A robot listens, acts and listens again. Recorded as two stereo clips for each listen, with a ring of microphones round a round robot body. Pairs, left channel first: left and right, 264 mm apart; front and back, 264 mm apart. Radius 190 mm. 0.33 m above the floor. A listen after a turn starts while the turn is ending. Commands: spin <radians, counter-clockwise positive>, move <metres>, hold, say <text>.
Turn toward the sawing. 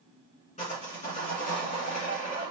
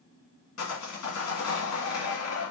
spin 0.35
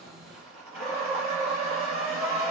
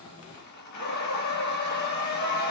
say Found it: sawing, straight ahead, 1 to 2 m away.